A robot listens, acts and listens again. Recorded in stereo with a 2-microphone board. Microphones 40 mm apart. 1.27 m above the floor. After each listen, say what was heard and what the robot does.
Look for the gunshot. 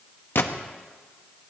The gunshot: about 65° left or 115° left. Turn 65° left.
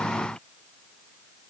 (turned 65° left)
Keep listening.
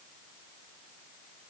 I heard a gunshot, but can't make it out now. It was about straight ahead or 50° left.